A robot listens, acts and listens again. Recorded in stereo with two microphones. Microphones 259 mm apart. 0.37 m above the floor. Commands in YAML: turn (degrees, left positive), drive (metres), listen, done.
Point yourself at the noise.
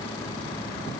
listen: true
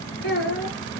turn: 50
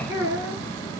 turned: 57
turn: -15
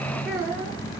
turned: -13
turn: -10
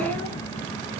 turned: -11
done: "Facing the child speaking."